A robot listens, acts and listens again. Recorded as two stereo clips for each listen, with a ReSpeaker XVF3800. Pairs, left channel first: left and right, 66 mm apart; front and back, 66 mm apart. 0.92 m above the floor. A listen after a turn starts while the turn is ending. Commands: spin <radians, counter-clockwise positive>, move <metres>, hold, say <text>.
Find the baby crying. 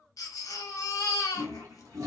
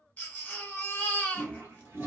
spin 1.13
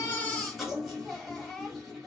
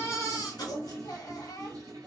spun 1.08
say Found it: a baby crying, straight ahead.